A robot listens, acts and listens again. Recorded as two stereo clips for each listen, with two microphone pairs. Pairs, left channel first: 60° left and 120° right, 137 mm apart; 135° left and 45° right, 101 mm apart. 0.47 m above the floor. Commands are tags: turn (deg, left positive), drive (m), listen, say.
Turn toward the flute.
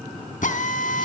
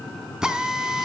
<listen/>
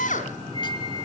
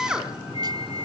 <turn deg="115"/>
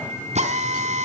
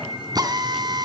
<listen/>
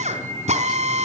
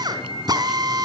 <turn deg="-15"/>
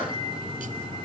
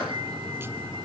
<listen/>
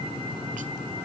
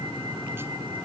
<listen/>
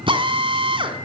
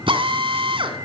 <say>Facing where the flute came from. I can't hear it now.</say>